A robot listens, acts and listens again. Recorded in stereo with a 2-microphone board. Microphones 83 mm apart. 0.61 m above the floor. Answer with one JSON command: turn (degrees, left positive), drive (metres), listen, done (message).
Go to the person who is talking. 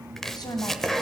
{"turn": 50}
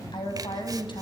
{"turn": 75}
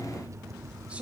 {"turn": -15}
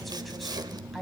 {"drive": 1.0}
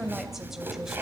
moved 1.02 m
{"drive": 1.0}
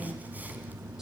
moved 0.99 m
{"listen": true}
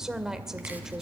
{"drive": 1.0}
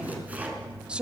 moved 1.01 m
{"turn": -15}
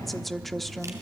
{"drive": 1.0}
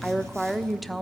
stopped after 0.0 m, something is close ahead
{"done": "Arrived at the woman speaking, straight ahead."}